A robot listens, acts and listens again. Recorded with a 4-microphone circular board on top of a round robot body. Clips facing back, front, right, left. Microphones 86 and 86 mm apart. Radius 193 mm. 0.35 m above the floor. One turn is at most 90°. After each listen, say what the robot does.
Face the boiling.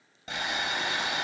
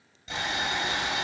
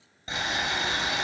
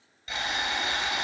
Turn 90° right.
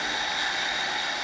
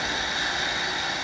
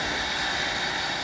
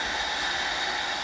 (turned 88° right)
Turn 60° right.
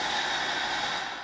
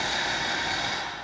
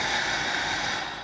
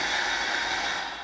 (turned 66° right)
Found it: boiling, straight ahead.